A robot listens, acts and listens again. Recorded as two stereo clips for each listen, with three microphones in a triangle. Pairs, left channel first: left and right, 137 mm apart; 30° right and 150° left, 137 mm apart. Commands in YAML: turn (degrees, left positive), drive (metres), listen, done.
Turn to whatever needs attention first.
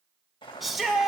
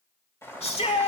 done: "Found it: a shout, straight ahead, 1 to 2 m away."